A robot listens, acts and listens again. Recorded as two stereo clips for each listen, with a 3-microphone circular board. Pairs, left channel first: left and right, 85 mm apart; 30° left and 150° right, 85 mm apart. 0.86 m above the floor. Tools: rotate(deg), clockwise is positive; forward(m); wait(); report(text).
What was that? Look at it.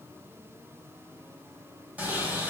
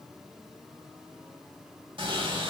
rotate(160)
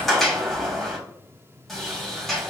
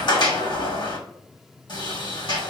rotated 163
report("Found it: a sliding door, straight ahead.")